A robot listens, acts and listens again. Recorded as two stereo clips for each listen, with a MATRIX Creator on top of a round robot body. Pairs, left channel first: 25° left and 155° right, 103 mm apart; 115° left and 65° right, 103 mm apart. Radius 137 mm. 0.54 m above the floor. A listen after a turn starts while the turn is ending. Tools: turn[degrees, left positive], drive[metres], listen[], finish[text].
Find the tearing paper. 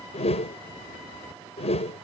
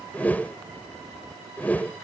Action: listen[]
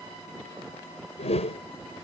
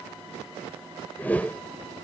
Action: listen[]
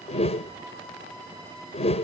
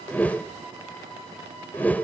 Action: finish[I can't make out tearing paper to turn to.]